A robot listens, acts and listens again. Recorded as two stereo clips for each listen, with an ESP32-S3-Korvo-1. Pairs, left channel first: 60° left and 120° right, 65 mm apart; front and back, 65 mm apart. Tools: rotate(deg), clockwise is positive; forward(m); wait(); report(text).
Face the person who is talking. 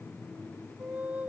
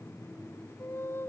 wait()
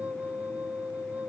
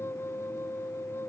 wait()
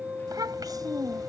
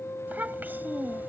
rotate(120)
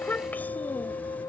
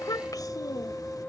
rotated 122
report("Facing the child speaking.")